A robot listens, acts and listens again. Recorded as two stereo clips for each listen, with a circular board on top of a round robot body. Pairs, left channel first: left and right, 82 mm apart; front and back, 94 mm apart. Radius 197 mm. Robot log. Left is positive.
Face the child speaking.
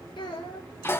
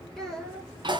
note: The child speaking: 85° left.
cmd yaw +85
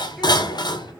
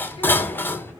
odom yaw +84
cmd idle
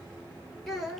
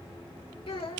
end: Facing the child speaking, 1 to 2 m away.